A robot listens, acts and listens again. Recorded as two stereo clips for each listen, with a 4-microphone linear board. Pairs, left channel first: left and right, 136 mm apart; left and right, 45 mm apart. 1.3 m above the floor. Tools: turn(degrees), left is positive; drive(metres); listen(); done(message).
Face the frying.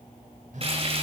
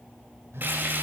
turn(degrees=-50)
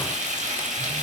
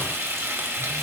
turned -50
turn(degrees=-80)
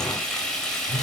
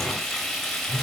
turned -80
done("Facing the frying, over 4 m away.")